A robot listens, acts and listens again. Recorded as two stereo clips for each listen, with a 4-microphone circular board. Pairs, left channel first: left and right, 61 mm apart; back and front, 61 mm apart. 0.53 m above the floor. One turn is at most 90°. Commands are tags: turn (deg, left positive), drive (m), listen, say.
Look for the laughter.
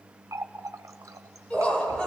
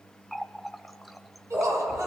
<turn deg="15"/>
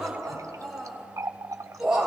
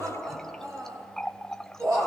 <turn deg="-15"/>
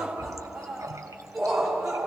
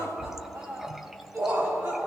<turn deg="-10"/>
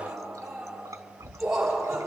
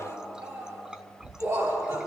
<say>Found it: laughter, straight ahead.</say>